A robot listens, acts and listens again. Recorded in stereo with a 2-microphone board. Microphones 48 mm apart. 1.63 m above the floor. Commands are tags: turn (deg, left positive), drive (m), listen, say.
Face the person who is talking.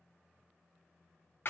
<listen/>
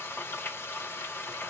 <listen/>
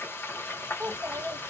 <turn deg="-55"/>
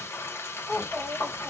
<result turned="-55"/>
<turn deg="-10"/>
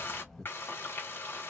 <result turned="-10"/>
<say>Found it: a child speaking, straight ahead, 1 to 2 m away.</say>